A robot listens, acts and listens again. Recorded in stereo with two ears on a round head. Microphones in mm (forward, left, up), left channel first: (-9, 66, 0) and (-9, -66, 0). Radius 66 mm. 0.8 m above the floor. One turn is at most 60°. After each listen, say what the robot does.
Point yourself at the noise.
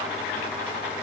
Keep listening.
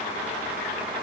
Keep listening.
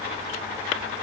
I can't make out anything to turn to.